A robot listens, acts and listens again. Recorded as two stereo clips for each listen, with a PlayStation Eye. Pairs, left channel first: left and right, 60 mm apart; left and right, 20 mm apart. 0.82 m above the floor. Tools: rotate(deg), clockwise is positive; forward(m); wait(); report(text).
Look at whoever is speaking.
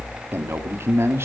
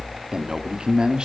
rotate(45)
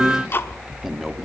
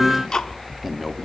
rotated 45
wait()
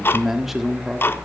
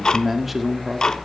report("Found it: a man speaking, straight ahead.")